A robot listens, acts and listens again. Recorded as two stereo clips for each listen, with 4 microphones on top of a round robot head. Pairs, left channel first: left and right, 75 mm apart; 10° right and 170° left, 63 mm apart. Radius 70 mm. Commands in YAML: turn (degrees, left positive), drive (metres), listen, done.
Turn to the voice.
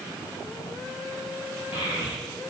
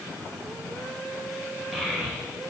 turn: 85
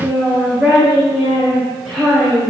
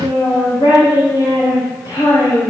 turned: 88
done: "Found it: a child speaking, straight ahead, 2 to 4 m away."